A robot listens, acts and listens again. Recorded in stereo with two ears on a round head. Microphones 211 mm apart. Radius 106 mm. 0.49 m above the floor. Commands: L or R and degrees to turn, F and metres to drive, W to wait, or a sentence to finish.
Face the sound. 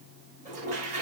R30
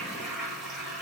Facing the toilet flushing, over 4 m away.